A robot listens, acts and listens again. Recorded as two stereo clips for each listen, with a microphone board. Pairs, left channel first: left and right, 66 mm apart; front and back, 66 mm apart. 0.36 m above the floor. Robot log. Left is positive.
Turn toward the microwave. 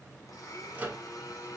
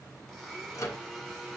note: The microwave: 30° right.
cmd yaw -30
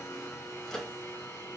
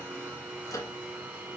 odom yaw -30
note: The microwave is now 10° left.
cmd yaw +10
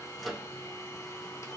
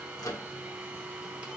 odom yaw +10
end: Facing the microwave, 1 to 2 m away.